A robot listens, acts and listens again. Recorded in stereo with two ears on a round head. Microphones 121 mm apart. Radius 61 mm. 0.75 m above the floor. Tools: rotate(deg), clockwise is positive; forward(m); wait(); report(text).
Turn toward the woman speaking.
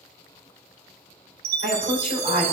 rotate(-70)
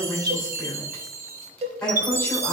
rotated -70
rotate(-10)
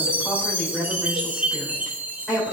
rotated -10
report("Found it: a woman speaking, straight ahead.")